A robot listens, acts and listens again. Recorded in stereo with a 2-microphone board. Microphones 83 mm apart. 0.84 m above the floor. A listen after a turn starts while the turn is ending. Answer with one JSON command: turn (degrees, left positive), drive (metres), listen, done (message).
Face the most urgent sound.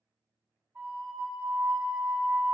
{"listen": true}
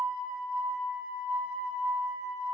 {"listen": true}
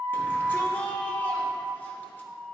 {"turn": 25}
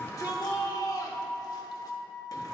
{"turn": 130}
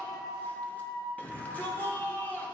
{"turn": 20}
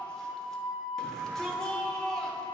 {"done": "Facing the shout, under 1 m away."}